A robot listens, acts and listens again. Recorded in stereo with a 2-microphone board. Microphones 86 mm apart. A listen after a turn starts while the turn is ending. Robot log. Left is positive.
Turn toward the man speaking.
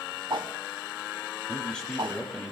cmd yaw +30
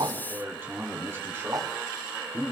note: So it is at 25° right.
cmd yaw -25
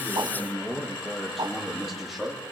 end: Found it: a man speaking, straight ahead, over 4 m away.